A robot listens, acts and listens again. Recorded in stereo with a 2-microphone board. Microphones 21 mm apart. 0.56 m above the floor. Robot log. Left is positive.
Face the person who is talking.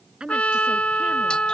note: The woman speaking: about 40° right or 140° right.
cmd yaw -40
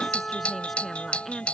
note: So it is at 10° left.
cmd yaw +10
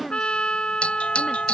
cmd idle
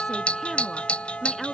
note: The woman speaking is now 10° left.
cmd yaw +10
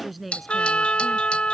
end: Facing the woman speaking.